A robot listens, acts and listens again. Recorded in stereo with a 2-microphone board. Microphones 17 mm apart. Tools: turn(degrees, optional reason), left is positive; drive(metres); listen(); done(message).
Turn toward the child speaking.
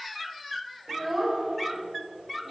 turn(degrees=-20, reason="The child speaking: about 20° right or 160° right.")
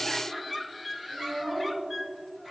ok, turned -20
turn(degrees=-30)
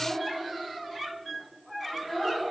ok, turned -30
turn(degrees=20, reason="So it is at 20° left.")
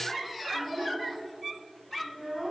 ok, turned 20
turn(degrees=10, reason="The child speaking is now 10° left.")
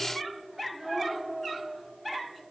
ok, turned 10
done("Found it: a child speaking, straight ahead, over 4 m away.")